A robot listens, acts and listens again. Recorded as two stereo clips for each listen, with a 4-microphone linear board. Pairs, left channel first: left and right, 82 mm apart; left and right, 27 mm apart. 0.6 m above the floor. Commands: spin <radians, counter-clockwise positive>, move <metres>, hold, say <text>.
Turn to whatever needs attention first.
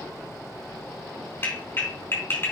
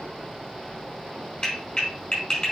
hold
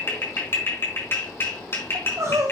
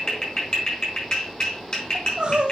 spin -0.70
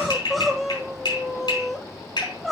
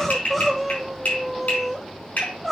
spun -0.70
say Facing the crying, 1 to 2 m away.